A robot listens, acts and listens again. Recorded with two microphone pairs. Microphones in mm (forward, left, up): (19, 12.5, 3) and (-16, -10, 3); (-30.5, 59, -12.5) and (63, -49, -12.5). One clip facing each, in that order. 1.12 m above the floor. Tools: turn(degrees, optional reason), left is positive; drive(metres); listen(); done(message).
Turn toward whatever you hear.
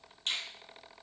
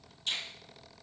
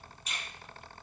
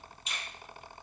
turn(degrees=15, reason="The finger snap: 15° left.")
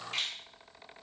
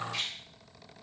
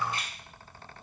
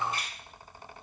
done("Found it: a finger snap, straight ahead.")